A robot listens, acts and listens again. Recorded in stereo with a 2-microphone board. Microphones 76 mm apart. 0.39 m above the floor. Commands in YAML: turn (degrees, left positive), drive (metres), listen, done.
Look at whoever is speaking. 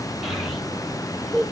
turn: 30
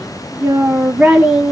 turn: -30
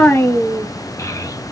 turn: 45
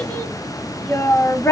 turn: 35
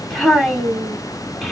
done: "Facing the child speaking."